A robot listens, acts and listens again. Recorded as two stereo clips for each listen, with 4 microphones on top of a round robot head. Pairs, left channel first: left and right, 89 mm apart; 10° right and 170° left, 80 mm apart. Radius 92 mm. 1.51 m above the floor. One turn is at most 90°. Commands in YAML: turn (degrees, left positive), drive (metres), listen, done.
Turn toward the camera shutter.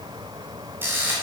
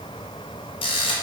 turn: -20
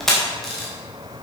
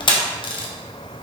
done: "Found it: a camera shutter, straight ahead, 1 to 2 m away."